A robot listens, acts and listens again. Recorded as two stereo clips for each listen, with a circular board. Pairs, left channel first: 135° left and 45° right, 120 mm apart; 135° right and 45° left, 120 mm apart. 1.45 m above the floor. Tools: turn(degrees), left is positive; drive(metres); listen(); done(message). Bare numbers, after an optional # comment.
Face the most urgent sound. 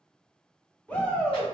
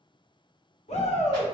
# The shout: 145° right.
turn(-145)
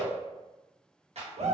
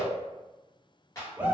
# The shout is now 30° right.
turn(-30)
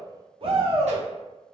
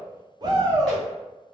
# The shout is now 10° right.
turn(-10)
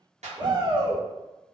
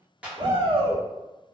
done("Found it: a shout, straight ahead, under 1 m away.")